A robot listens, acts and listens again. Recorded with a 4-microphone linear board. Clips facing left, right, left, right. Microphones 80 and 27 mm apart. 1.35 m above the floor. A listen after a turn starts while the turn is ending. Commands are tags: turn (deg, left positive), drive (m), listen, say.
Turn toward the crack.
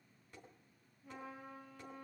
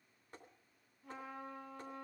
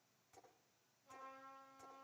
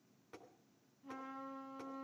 <listen/>
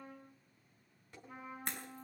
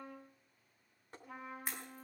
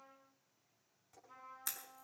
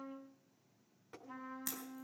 <turn deg="-30"/>
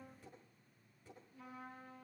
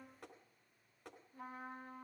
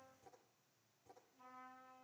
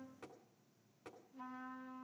<listen/>
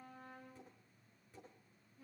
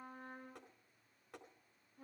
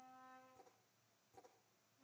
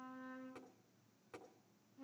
<say>I heard a crack, but can't make it out now. It was about 25° left or 145° right.</say>